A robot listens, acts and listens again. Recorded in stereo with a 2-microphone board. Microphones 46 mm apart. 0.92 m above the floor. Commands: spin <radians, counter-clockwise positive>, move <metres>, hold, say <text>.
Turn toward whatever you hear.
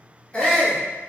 spin 0.44
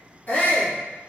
spin 2.18
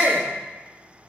spin 0.79
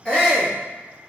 spin 0.35
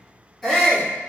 say Found it: a shout, straight ahead, 1 to 2 m away.